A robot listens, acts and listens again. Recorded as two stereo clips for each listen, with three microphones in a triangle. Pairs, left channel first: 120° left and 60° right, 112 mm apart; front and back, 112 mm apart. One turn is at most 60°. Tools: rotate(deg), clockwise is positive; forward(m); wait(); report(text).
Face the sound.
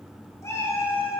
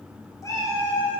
rotate(-45)
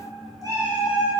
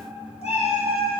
rotate(20)
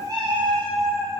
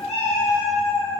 rotate(15)
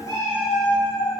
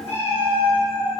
rotate(15)
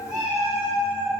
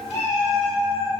rotate(15)
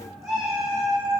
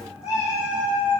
report("Facing the cat meowing, 2 to 4 m away.")